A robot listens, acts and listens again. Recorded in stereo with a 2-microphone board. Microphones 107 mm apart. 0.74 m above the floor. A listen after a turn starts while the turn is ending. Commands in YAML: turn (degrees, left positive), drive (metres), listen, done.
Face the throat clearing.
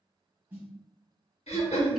turn: 90
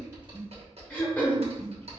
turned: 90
turn: 15
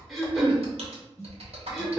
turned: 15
done: "Found it: throat clearing, straight ahead, under 1 m away."